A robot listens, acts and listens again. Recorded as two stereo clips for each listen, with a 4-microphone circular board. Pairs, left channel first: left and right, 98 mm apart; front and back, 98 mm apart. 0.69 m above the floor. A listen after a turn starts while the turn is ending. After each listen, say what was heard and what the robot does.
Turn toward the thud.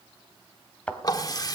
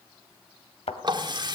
The thud: 10° left. Turn 10° left.
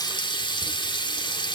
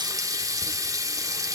Facing where the thud came from. I can't hear it now.